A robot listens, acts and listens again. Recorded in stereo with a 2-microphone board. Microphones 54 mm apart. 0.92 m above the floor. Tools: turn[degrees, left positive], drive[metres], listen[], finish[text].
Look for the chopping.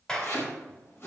Thought: The chopping: about 50° left or 130° left.
Action: turn[50]
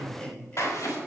Thought: So it is at 80° left.
Action: turn[80]
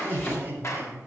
Thought: The chopping is now 25° left.
Action: turn[25]
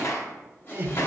Thought: The chopping is now 30° left.
Action: turn[30]
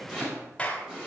Thought: The chopping is now 10° right.
Action: turn[-10]
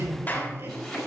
Action: finish[Found it: chopping, straight ahead.]